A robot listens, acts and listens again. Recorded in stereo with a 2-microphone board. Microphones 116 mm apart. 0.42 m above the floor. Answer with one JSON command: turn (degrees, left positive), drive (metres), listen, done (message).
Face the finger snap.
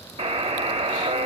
{"listen": true}
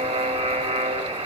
{"listen": true}
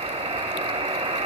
{"done": "I can't make out a finger snap to turn to."}